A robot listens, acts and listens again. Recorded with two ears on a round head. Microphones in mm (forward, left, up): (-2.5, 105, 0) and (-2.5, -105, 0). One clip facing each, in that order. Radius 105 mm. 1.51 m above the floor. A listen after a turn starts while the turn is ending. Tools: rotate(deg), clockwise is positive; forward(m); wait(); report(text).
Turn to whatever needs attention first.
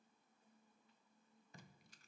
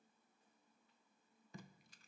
wait()
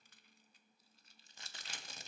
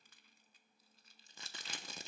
wait()
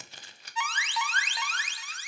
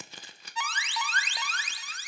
rotate(35)
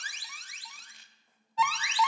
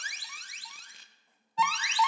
report("Found it: an alarm, straight ahead.")